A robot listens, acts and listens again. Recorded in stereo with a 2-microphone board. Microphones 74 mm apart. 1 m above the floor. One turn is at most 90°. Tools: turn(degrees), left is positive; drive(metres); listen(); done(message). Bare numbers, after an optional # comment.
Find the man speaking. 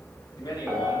# The man speaking: about 60° left or 120° left.
turn(60)
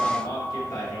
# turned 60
# So it is at 55° left.
turn(55)
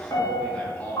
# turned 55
# The man speaking is now 20° left.
turn(20)
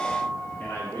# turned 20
# The man speaking is now 25° left.
turn(25)
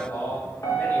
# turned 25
# The man speaking is now 25° left.
turn(25)
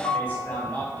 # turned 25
# The man speaking is now 20° left.
turn(20)
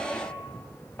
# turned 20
listen()
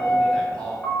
# The man speaking is now 10° left.
turn(10)
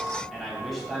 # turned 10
done("Found it: a man speaking, straight ahead, 2 to 4 m away.")